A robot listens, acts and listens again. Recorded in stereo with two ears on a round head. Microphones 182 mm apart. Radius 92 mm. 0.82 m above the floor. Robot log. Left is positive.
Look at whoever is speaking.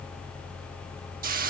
cmd idle
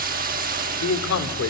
cmd yaw +90
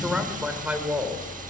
note: So it is at 10° right.
cmd yaw -10
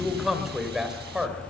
end: Facing the man speaking.